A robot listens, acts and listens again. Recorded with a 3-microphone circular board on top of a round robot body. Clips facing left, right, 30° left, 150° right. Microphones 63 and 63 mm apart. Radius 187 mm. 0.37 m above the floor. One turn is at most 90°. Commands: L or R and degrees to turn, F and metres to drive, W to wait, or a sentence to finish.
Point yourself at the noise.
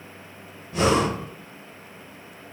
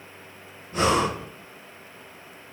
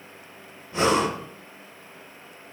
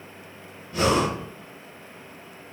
R35
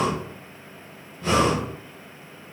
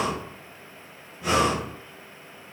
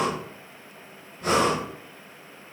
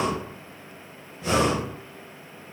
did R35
R10
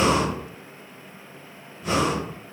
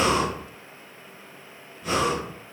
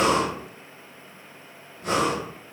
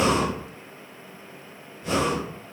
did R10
Found it: breathing, straight ahead.